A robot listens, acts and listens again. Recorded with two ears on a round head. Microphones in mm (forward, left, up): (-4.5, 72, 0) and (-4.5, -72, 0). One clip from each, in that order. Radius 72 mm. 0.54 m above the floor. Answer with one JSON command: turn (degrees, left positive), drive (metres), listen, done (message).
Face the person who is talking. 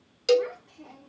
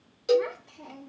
{"turn": -65}
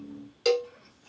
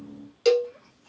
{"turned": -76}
{"listen": true}
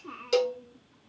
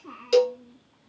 {"done": "Facing the child speaking."}